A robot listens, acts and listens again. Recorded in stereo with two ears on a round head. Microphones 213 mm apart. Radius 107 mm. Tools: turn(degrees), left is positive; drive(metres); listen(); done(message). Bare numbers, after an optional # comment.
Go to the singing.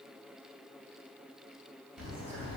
listen()
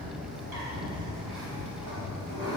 listen()
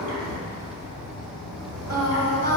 # The singing: about 65° right or 115° right.
turn(-65)
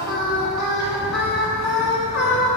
drive(1.0)
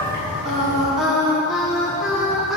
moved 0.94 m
drive(1.0)
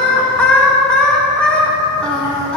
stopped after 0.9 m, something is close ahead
done("Arrived at the singing, straight ahead.")